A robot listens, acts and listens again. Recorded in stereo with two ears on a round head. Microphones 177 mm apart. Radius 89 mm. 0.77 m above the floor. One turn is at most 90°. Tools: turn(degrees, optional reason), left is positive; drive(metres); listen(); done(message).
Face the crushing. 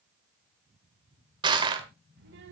turn(degrees=-25, reason="The crushing: about 25° right or 155° right.")
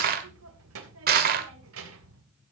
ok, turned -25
turn(degrees=-90, reason="So it is at 130° right.")
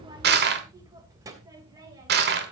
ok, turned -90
turn(degrees=-55, reason="The crushing is now 55° right.")
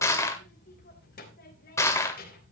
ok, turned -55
turn(degrees=15, reason="The crushing is now 15° left.")
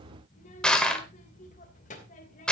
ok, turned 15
done("Found it: crushing, straight ahead, 1 to 2 m away.")